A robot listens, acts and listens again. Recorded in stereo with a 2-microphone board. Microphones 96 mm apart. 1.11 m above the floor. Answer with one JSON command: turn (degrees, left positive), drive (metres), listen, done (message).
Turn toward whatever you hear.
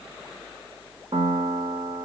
{"turn": -65}
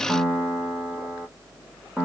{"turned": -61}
{"turn": -10}
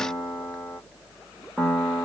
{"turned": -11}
{"done": "Found it: a piano, straight ahead."}